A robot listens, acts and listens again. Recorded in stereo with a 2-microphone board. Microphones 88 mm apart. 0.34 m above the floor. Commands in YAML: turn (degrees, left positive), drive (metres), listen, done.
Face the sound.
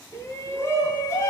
turn: 30
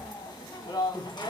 turn: 115
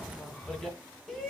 done: "Found it: a shout, straight ahead, 2 to 4 m away."